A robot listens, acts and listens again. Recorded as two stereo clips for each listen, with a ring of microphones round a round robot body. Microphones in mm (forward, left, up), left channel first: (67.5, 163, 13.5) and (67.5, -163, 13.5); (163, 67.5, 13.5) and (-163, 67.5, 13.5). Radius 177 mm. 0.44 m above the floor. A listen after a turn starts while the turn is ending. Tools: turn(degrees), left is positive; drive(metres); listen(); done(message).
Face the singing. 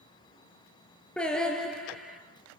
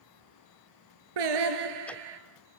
turn(degrees=180)
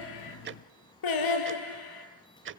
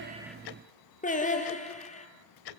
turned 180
turn(degrees=70)
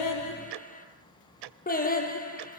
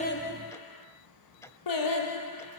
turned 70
turn(degrees=25)
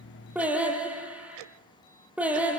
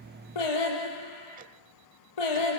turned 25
done("Found it: singing, straight ahead, over 4 m away.")